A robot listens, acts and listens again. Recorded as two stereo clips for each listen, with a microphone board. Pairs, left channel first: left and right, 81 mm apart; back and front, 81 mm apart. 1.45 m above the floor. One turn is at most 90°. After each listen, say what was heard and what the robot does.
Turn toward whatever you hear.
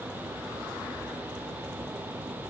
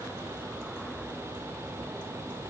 Keep listening.
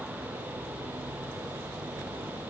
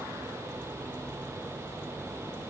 Keep listening.
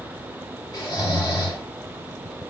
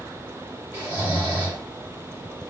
The snoring: 55° left. Turn 55° left.
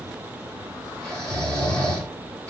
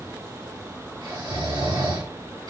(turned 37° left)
The snoring is now 15° left. Turn 15° left.
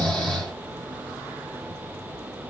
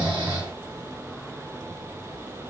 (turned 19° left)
Found it: snoring, straight ahead.